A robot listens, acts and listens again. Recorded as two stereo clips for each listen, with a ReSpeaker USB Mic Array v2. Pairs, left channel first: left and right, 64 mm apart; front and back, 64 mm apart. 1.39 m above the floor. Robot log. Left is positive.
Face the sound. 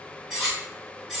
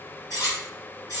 end: Facing the cutlery clinking.